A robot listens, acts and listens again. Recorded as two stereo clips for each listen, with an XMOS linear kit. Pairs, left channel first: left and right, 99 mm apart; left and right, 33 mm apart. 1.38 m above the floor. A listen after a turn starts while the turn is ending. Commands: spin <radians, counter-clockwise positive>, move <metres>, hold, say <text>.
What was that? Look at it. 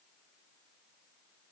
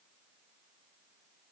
hold
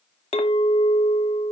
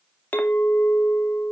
spin 1.57
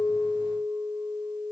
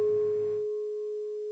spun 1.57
say Found it: a clink, straight ahead.